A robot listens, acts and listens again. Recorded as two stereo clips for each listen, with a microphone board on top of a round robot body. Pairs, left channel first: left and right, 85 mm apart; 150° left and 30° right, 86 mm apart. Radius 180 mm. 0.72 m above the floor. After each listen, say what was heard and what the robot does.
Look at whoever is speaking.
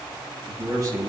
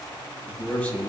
The man speaking: 140° right. Turn 140° right.
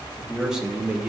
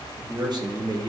The man speaking is now 15° right. Turn 15° right.
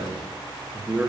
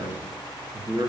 The man speaking is now 20° right. Turn 20° right.
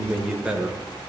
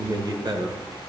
The man speaking is now 15° right. Turn 15° right.
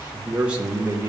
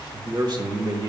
The man speaking is now 25° right. Turn 25° right.
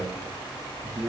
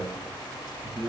The man speaking is now 15° right. Turn 15° right.
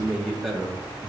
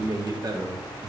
Facing the man speaking.